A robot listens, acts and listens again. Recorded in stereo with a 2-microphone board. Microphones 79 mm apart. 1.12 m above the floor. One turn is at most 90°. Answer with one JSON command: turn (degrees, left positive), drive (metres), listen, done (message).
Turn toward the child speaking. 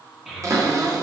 {"turn": -30}
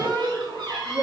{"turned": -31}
{"turn": -90}
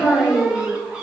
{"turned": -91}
{"done": "Facing the child speaking."}